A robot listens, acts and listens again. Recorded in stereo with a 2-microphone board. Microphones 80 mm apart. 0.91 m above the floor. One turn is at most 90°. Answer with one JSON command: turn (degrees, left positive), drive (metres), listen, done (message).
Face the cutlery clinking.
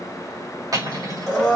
{"turn": -50}
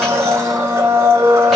{"listen": true}
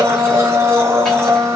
{"listen": true}
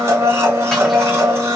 {"done": "I heard cutlery clinking, but can't make it out now. It was about straight ahead or 80° right."}